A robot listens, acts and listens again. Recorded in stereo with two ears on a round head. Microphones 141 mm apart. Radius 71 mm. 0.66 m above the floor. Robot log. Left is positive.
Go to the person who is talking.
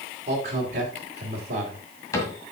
note: The man speaking: about 45° right or 135° right.
cmd yaw -45
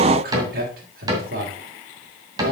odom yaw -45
note: So it is at 85° right.
cmd yaw -85
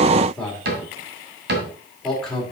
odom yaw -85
cmd fwd 1.0
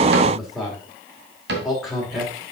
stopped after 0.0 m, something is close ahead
end: Something is in my way. I am facing the man speaking but have not reached it.